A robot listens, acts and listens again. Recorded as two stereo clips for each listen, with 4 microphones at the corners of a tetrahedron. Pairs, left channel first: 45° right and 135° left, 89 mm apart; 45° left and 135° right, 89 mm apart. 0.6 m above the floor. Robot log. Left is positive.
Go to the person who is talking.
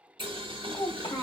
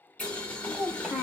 note: The child speaking: 50° right.
cmd yaw -50
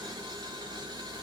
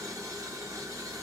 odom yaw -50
cmd idle
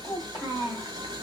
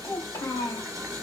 cmd fwd 1.0
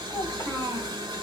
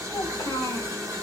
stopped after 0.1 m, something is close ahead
cmd idle
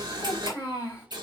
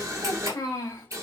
end: Blocked. The child speaking is further on, straight ahead.